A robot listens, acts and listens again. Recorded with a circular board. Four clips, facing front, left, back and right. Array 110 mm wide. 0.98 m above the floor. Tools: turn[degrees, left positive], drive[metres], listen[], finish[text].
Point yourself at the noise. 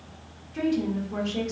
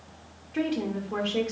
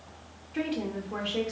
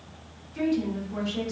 Thought: The woman speaking: 110° left.
Action: turn[110]
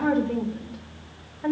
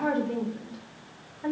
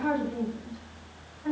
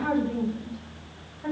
Thought: The woman speaking is now 25° left.
Action: turn[25]
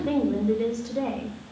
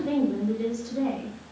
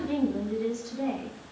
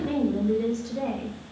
Action: finish[Found it: a woman speaking, straight ahead.]